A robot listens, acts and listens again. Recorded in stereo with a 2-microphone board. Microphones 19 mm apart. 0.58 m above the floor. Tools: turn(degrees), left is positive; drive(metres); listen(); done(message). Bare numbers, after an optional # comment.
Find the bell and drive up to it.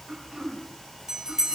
# The bell: about 35° right or 145° right.
turn(-35)
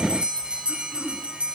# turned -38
# So it is at 110° right.
turn(-110)
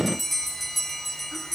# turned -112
drive(1.0)
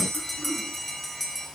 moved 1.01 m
drive(1.0)
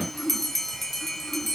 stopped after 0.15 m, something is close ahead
# The bell is now 10° left.
turn(10)
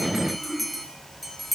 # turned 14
done("Blocked. The bell is further on, straight ahead.")